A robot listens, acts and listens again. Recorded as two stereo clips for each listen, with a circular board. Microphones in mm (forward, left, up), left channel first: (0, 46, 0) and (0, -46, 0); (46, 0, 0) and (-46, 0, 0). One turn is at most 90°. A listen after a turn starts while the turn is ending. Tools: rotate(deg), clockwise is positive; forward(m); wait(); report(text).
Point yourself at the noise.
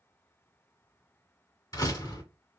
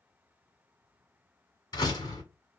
rotate(-45)
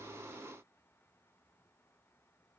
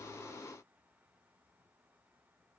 report("Facing where the door slam came from. I can't hear it now.")